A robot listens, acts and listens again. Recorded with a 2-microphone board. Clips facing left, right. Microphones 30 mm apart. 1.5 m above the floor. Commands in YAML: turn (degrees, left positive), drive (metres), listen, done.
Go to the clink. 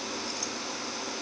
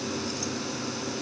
listen: true
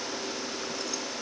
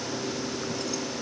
listen: true
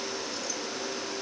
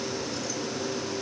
done: "I can't make out a clink."